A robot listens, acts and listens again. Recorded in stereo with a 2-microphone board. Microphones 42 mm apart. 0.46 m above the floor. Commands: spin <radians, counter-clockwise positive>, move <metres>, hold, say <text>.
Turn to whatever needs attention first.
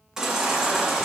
spin -0.52
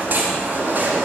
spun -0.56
spin -2.36
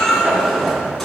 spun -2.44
say Found it: a baby crying, straight ahead.